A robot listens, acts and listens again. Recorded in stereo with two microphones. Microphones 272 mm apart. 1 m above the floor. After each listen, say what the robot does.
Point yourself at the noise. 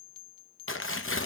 Turn 55° left.
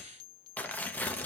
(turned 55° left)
Facing the tearing paper.